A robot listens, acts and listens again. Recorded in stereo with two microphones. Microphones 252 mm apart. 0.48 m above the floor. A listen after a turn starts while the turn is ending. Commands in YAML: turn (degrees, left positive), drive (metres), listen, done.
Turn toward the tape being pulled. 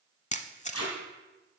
turn: 70
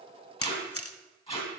turn: 25
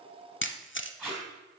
done: "Found it: tape being pulled, straight ahead."